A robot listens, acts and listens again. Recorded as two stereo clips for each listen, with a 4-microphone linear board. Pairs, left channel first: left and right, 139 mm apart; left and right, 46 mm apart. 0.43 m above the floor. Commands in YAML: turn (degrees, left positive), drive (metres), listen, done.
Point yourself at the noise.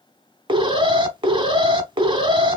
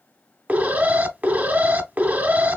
turn: -35
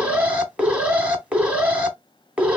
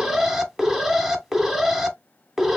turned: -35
turn: -10
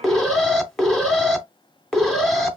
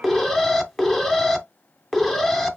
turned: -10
done: "Facing the alarm."